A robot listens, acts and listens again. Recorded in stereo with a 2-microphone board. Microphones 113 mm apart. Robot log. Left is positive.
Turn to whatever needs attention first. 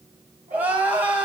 cmd yaw -30
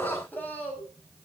note: So it is at 15° left.
cmd yaw +15
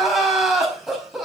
end: Found it: crying, straight ahead.